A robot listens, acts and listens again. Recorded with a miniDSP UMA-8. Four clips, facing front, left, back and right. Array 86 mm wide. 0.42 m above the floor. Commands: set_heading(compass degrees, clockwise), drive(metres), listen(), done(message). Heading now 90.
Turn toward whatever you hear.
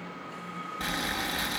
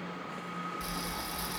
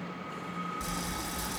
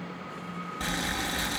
set_heading(130)
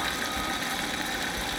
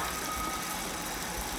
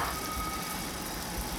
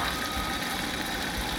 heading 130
set_heading(155)
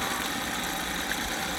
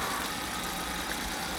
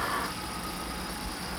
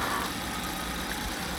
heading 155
done("Found it: boiling, straight ahead, 2 to 4 m away.")